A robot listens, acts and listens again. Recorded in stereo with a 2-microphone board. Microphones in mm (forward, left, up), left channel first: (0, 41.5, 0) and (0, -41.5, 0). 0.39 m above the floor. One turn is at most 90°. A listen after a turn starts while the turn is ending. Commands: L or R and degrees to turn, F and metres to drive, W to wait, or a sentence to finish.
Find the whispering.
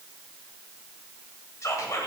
L40
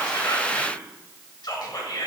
L90
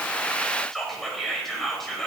Found it: whispering, straight ahead, 1 to 2 m away.